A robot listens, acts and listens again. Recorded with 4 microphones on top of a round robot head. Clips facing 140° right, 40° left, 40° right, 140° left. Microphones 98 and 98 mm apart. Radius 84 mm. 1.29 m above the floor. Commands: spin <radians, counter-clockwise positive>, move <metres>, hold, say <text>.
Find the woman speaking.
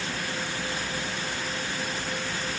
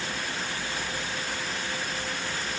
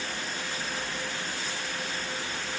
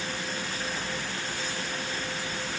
hold
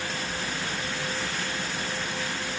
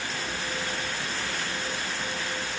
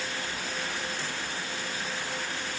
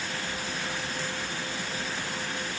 hold
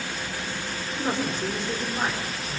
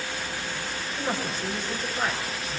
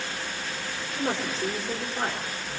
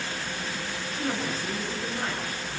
spin -1.13
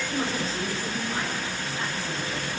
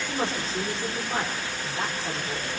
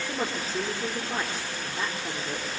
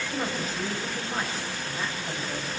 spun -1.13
spin -0.35
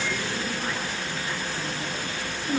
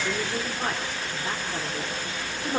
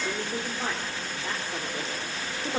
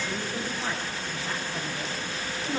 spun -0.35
say Found it: a woman speaking, straight ahead, over 4 m away.